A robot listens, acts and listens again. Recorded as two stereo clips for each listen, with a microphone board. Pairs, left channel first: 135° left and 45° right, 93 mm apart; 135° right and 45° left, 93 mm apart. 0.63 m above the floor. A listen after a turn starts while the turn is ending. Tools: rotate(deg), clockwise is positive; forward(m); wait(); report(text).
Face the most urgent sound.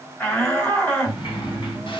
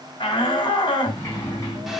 rotate(160)
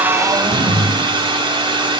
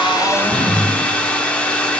wait()
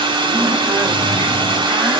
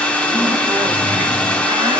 wait()
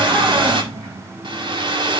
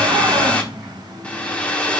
report("I heard a shout from this way, but can't make it out now.")